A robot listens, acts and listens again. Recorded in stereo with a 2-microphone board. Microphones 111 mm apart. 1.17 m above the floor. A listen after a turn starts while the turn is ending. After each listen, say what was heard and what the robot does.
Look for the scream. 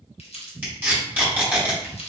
Keep listening.
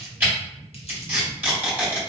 Keep listening.
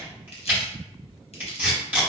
I can't make out a scream to turn to.